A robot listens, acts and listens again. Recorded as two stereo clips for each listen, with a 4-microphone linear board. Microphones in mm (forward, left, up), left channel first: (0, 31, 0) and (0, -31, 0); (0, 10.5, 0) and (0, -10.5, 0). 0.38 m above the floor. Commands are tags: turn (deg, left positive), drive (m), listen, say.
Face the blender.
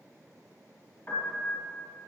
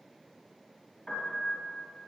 <listen/>
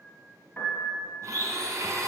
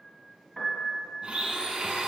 <turn deg="-60"/>
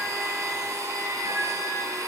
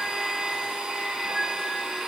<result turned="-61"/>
<turn deg="-60"/>
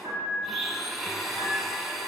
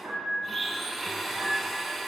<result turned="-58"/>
<say>Found it: a blender, straight ahead, 1 to 2 m away.</say>